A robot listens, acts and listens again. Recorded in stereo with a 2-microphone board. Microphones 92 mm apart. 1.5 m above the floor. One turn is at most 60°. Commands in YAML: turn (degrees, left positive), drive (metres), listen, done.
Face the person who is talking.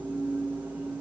listen: true
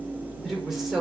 turn: -30
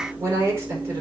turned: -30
turn: -60
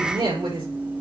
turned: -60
turn: -60
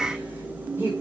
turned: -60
turn: -25
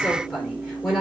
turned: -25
done: "Facing the woman speaking, over 4 m away."